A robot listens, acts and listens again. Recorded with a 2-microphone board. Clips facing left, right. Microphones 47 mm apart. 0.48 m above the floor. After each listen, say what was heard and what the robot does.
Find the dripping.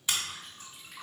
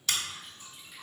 Turn 90° left.
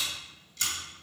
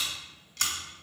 Keep listening.
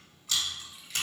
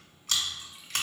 The dripping is now 15° right. Turn 15° right.
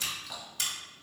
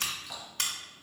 Facing the dripping.